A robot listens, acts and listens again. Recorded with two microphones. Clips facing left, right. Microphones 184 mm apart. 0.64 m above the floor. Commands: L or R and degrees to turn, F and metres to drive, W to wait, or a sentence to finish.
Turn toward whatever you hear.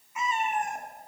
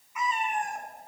L25
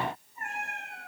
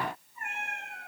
L35
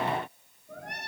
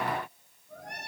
L115
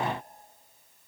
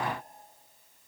W
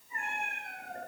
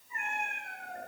L35
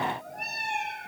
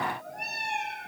Found it: a cat meowing, straight ahead.